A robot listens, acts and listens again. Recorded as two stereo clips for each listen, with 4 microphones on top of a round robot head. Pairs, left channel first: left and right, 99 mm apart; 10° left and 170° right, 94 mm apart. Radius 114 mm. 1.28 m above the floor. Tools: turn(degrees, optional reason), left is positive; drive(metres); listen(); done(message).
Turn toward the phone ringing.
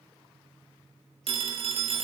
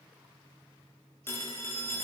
turn(degrees=-60, reason="The phone ringing: 60° right.")
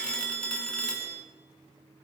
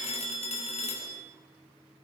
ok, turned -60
turn(degrees=10, reason="The phone ringing is now 10° left.")
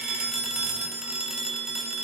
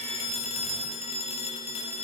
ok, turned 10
done("Facing the phone ringing, 1 to 2 m away.")